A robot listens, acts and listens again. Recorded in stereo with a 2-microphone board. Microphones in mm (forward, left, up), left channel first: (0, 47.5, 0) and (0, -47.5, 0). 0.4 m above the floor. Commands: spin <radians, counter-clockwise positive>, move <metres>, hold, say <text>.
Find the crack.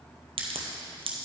spin -1.57
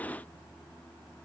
say Facing where the crack came from. I can't hear it now.